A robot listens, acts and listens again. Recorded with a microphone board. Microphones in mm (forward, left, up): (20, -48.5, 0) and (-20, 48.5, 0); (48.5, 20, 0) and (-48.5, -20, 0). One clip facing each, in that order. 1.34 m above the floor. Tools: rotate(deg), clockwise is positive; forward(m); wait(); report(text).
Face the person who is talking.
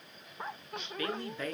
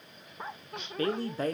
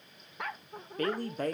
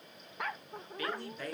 rotate(-65)
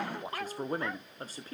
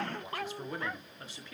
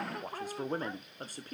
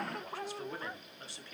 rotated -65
rotate(20)
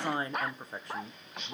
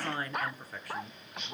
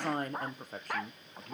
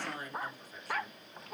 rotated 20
report("Facing the woman speaking, under 1 m away.")